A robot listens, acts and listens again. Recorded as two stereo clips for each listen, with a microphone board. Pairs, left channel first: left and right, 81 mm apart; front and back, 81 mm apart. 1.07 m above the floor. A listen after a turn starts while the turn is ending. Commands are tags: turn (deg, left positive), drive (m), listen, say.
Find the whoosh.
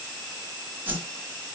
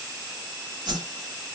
<turn deg="-160"/>
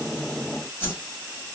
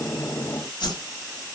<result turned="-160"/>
<turn deg="25"/>
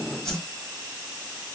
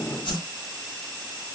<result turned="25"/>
<say>Found it: a whoosh, straight ahead, 1 to 2 m away.</say>